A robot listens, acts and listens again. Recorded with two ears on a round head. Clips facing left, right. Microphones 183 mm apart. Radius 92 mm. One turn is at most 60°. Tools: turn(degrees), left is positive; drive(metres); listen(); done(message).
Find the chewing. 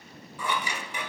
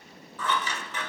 listen()
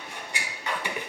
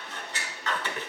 listen()
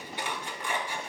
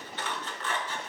done("I can't make out chewing to turn to.")